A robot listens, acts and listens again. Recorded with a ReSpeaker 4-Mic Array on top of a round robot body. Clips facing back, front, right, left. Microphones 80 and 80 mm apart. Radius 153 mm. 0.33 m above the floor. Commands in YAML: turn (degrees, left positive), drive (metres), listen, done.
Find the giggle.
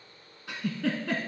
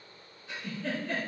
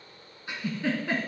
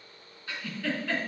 turn: -165
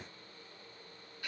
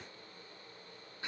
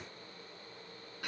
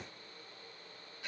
turn: -60
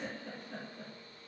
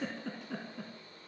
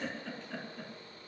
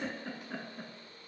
turn: 15
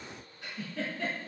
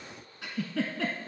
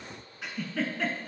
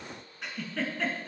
done: "Facing the giggle, 1 to 2 m away."